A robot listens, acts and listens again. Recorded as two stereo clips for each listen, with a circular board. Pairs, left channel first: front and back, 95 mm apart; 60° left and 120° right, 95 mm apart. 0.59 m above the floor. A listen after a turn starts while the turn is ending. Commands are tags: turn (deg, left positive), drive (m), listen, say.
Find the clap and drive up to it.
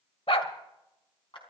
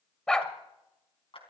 <turn deg="30"/>
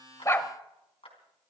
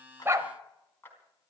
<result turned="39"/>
<turn deg="-10"/>
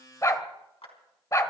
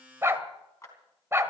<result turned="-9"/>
<drive m="1.0"/>
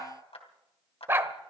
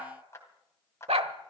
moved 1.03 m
<drive m="1.0"/>
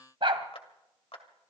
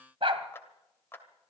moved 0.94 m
<drive m="1.0"/>
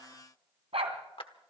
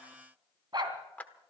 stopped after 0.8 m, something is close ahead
<turn deg="-15"/>
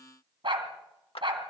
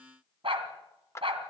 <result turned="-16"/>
<say>Arrived at the clap, straight ahead.</say>